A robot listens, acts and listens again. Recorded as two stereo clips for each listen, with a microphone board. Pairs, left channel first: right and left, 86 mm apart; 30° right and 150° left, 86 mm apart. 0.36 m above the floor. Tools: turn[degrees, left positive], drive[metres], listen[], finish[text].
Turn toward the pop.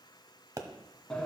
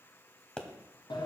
Thought: The pop: 50° left.
Action: turn[50]
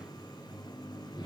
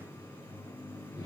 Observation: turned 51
Action: finish[Facing where the pop came from. I can't hear it now.]